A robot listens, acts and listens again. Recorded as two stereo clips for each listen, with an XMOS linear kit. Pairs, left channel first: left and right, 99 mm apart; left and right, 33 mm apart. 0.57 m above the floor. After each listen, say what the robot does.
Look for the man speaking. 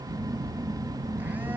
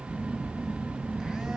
Keep listening.
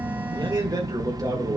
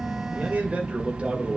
Turn 35° right.
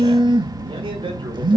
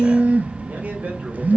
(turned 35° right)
Keep listening.
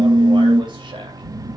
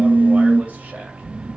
Keep listening.
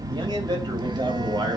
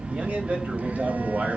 Turn 135° right.
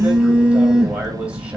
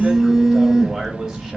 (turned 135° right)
Keep listening.
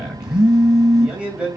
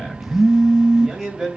Turn 10° right.
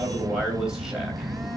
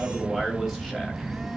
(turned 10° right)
Found it: a man speaking, straight ahead.